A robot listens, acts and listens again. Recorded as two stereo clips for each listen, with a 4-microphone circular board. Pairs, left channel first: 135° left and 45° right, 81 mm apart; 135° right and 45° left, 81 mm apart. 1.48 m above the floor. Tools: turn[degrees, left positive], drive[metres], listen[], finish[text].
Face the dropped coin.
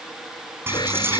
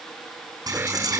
Thought: The dropped coin: 10° left.
Action: turn[10]
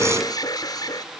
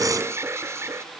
Action: finish[I heard a dropped coin from this way, but can't make it out now.]